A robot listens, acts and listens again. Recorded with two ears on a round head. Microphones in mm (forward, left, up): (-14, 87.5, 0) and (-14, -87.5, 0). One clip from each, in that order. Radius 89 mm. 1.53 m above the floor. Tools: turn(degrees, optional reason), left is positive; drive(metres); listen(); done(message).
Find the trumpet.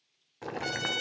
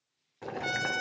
turn(degrees=50, reason="The trumpet: about 50° left or 130° left.")
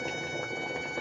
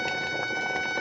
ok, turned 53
done("Found it: a trumpet, straight ahead, 2 to 4 m away.")